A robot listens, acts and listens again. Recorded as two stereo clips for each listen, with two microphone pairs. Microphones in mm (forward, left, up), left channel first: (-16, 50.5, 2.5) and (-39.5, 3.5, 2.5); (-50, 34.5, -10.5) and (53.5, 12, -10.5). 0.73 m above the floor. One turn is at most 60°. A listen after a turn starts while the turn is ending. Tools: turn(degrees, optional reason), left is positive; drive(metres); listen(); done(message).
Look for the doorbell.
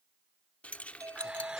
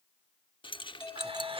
turn(degrees=-60, reason="The doorbell: 125° right.")
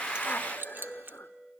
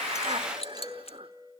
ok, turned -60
turn(degrees=-60, reason="The doorbell is now 65° right.")
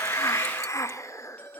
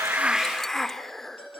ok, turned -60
done("Found it: a doorbell, straight ahead.")